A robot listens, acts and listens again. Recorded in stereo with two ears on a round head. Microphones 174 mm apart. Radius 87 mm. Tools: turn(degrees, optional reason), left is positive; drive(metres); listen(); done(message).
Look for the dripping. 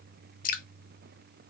turn(degrees=45, reason="The dripping: about 45° left or 135° left.")
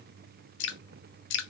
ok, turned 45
turn(degrees=85, reason="So it is at 85° left.")
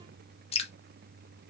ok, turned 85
turn(degrees=35, reason="The dripping is now 35° left.")
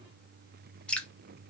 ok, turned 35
done("Facing the dripping.")